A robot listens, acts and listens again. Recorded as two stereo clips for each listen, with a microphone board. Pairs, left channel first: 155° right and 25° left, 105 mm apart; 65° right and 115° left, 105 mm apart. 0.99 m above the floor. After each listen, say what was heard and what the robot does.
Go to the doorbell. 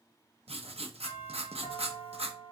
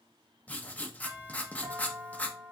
The doorbell: 170° left. Turn 170° left.
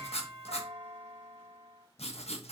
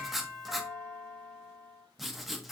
Drive 1.0 m forward.
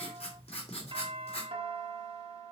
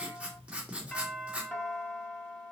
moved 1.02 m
Drive 1.0 m forward.
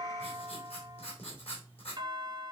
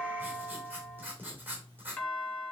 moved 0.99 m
Drive 1.0 m forward.
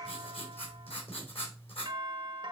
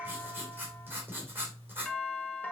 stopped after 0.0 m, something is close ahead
I am next to the doorbell.